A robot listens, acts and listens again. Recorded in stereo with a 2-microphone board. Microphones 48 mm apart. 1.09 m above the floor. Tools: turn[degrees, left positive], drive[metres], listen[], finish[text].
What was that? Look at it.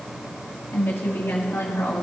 Thought: The woman speaking: about 65° left or 115° left.
Action: turn[65]
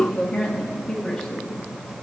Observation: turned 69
Thought: So it is at 10° left.
Action: turn[10]
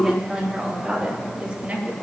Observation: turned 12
Thought: The woman speaking is now 25° right.
Action: turn[-25]
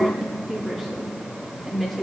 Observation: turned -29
Action: finish[Facing the woman speaking, 2 to 4 m away.]